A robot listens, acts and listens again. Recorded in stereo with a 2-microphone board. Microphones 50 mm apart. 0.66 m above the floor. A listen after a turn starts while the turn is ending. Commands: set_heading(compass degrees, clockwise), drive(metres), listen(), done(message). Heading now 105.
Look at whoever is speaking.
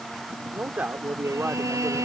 set_heading(140)
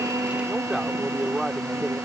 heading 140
done("Facing the man speaking.")